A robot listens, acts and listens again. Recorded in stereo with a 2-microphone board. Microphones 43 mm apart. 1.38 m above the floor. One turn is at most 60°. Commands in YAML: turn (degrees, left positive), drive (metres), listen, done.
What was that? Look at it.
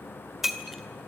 turn: -30
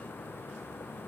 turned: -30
listen: true
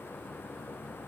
done: "I heard breaking glass, but can't make it out now. It was about 25° left or 145° right."